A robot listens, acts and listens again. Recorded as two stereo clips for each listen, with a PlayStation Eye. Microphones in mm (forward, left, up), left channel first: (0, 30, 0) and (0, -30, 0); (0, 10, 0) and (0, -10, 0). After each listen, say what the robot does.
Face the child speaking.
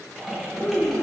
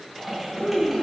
Turn 35° left.
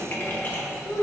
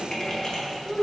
Turn 125° left.
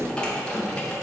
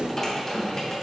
Keep listening.
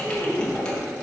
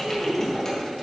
Facing the child speaking, 2 to 4 m away.